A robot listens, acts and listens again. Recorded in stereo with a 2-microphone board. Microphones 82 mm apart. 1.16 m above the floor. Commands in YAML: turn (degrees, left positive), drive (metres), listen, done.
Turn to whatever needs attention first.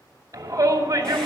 turn: -40
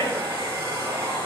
turn: -95
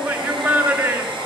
turn: -30
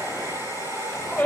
turn: 15
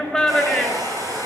done: "Found it: a shout, straight ahead, 2 to 4 m away."